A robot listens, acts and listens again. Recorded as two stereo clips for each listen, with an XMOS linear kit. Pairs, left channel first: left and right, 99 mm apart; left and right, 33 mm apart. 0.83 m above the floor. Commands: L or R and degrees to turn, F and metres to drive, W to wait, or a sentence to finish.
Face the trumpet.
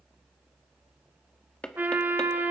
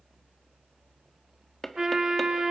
R20
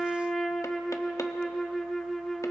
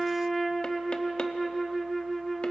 Facing the trumpet.